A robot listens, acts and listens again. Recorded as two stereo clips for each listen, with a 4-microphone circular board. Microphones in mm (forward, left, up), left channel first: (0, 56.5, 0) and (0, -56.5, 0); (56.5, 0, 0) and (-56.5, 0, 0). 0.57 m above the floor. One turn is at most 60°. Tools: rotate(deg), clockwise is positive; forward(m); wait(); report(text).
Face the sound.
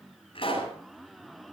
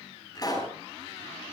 rotate(-55)
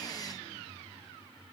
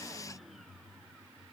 report("Facing where the pop came from. I can't hear it now.")